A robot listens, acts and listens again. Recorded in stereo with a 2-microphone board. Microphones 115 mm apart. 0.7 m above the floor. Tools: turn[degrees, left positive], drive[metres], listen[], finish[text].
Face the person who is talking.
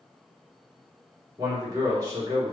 Thought: The man speaking: about 35° right or 145° right.
Action: turn[-35]
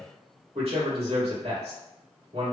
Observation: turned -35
Thought: So it is at 110° right.
Action: turn[-110]
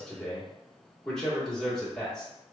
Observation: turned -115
Action: finish[Facing the man speaking.]